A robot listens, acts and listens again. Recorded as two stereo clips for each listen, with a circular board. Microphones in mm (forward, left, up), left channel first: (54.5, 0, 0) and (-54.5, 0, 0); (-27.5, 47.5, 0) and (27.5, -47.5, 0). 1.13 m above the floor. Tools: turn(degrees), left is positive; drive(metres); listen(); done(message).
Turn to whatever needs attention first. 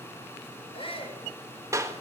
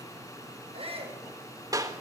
turn(degrees=-35)
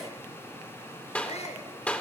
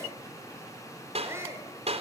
done("Found it: a shout, straight ahead.")